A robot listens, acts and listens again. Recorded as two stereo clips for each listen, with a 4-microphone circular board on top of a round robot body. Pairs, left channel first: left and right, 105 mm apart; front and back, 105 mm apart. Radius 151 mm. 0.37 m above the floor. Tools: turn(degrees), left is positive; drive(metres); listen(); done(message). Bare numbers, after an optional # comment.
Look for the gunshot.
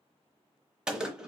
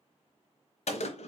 done("Found it: a gunshot, straight ahead, 1 to 2 m away.")